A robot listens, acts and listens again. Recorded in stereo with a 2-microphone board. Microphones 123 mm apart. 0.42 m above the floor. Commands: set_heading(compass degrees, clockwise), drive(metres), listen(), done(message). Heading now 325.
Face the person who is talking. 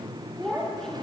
set_heading(295)
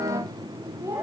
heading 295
set_heading(320)
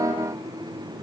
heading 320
listen()
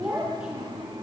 set_heading(330)
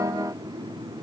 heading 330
listen()
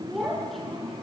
done("Facing the child speaking, over 4 m away.")